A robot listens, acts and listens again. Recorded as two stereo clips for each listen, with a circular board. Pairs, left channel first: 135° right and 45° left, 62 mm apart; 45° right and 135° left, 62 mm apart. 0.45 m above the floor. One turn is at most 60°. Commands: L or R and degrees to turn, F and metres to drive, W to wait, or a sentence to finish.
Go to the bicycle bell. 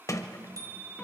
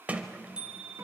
L60
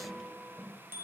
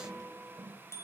F1.0
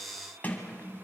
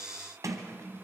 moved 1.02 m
W
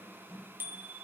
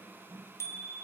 R10
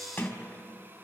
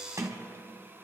W
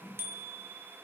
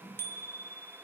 F1.0
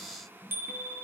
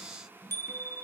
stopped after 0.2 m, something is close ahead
I am next to the bicycle bell.